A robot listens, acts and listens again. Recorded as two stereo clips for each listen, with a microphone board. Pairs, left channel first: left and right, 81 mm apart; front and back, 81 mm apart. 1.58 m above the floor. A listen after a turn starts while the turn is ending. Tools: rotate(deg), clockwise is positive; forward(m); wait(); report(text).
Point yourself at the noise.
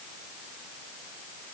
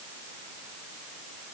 wait()
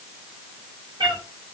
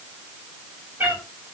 rotate(115)
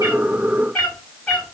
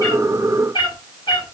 rotate(-15)
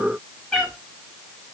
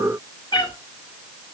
report("Facing the cat meowing.")